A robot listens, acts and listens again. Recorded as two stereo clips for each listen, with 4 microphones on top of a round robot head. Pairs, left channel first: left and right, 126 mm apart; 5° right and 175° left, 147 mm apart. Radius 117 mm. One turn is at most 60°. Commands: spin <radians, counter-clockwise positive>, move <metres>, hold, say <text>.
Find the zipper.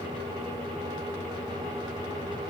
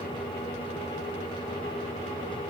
hold
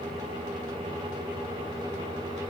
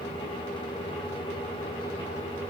hold
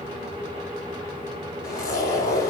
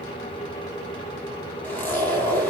spin 1.05
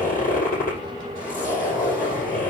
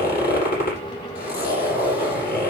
spin 0.17
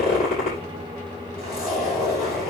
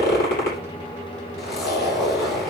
say Facing the zipper, over 4 m away.